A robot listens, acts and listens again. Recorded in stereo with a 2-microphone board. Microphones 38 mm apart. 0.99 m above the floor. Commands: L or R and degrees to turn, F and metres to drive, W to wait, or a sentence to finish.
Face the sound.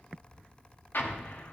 L60
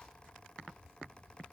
W
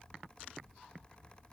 I heard an explosion, but can't make it out now. It was about straight ahead or 60° left.